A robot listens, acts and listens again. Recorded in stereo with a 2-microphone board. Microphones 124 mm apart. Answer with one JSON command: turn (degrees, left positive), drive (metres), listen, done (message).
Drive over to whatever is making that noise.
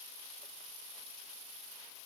{"listen": true}
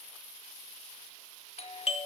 {"turn": 55}
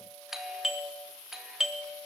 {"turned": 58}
{"drive": 1.0}
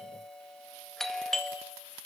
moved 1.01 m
{"drive": 1.0}
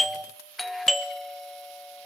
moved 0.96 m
{"drive": 1.0}
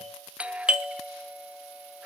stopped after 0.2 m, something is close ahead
{"turn": -10}
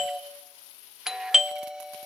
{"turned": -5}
{"done": "I am next to the doorbell."}